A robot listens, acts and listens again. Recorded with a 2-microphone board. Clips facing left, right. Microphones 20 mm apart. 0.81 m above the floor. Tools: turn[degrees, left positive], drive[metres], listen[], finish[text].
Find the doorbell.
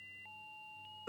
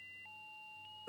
Action: listen[]
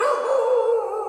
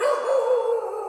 Action: listen[]
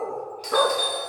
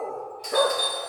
Thought: The doorbell: about 45° left or 135° left.
Action: turn[45]
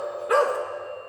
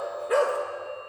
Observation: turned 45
Action: listen[]
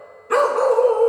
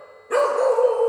Action: listen[]
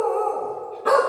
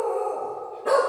Action: finish[I heard a doorbell, but can't make it out now. It was about straight ahead or 90° left.]